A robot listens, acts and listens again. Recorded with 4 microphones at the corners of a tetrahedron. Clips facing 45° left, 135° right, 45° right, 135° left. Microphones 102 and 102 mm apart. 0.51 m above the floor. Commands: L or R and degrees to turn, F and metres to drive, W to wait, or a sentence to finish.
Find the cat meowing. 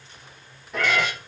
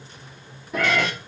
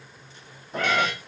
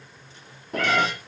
L135
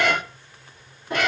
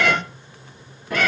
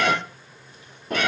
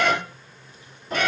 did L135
R20
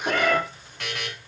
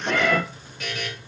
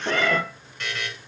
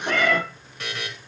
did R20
Facing the cat meowing, 1 to 2 m away.